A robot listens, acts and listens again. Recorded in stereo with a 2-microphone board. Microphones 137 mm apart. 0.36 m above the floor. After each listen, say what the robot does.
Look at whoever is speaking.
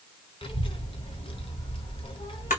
Turn 40° left.
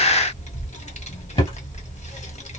Turn 90° left.
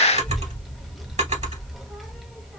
Facing the child speaking, 1 to 2 m away.